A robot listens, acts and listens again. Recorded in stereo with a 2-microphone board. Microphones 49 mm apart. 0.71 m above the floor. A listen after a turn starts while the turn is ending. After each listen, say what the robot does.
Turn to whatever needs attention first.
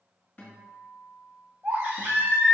Turn 60° right.
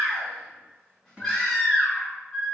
Facing the baby crying.